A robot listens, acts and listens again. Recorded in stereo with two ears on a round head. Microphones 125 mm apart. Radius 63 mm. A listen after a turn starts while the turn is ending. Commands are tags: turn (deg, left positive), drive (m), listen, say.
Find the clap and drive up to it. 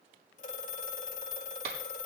<turn deg="-90"/>
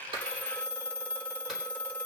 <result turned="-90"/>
<listen/>
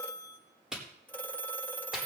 <drive m="1.0"/>
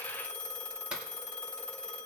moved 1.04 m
<listen/>
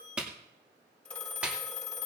<turn deg="-10"/>
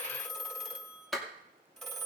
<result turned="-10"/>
<drive m="1.0"/>
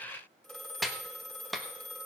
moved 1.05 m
<drive m="1.0"/>
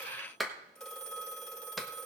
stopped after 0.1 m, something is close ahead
<say>I am next to the clap.</say>